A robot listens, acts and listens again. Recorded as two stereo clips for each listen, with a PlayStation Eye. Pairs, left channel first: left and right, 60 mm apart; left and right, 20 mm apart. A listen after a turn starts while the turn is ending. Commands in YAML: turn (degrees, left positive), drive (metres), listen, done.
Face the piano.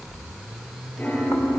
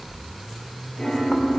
turn: 35
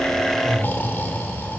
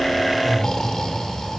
listen: true
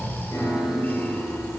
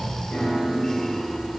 turn: 110
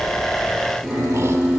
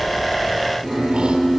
done: "Facing the piano, over 4 m away."